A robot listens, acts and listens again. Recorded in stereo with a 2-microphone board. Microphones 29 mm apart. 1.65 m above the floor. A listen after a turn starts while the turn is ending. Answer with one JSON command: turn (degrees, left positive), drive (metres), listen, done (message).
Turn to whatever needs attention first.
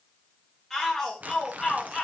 {"turn": 30}
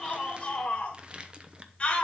{"turn": 145}
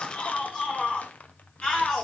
{"turn": 35}
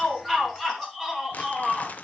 {"turn": 10}
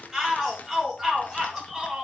{"done": "Facing the shout."}